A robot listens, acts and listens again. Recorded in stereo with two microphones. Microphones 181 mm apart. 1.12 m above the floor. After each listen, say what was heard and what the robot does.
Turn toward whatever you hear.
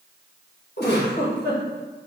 The giggle: about 65° left or 115° left. Turn 65° left.
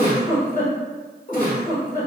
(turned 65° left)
So it is at 50° left. Turn 50° left.
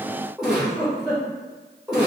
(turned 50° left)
Found it: a giggle, straight ahead.